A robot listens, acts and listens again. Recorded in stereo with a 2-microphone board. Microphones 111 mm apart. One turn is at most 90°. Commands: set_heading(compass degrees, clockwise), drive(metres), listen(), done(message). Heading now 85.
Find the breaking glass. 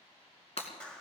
set_heading(25)
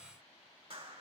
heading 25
listen()
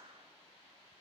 done("I heard breaking glass, but can't make it out now. It was about straight ahead or 60° left.")